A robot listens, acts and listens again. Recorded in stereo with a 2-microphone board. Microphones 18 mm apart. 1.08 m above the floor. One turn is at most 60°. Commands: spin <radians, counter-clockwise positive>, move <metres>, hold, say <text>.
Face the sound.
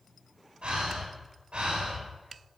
spin -1.05
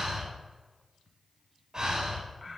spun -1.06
spin -0.79
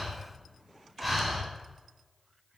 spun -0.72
say Facing the breathing.